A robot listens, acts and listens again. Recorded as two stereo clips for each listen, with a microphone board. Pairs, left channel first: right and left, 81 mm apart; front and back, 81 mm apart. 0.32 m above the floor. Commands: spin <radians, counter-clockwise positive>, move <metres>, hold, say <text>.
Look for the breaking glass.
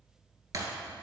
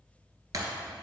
spin 2.36
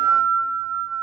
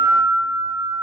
say Facing where the breaking glass came from. I can't hear it now.